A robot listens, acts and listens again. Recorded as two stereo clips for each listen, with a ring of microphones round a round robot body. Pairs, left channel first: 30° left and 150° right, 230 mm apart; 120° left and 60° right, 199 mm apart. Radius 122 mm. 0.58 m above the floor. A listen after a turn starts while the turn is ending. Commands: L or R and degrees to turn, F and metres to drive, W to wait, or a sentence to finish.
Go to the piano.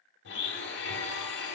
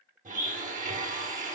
W
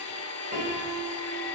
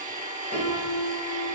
L165
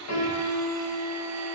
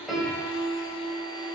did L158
F1.0
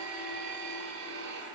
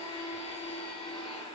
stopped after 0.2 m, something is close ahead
W
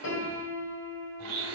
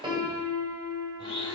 Blocked. The piano is further on, straight ahead.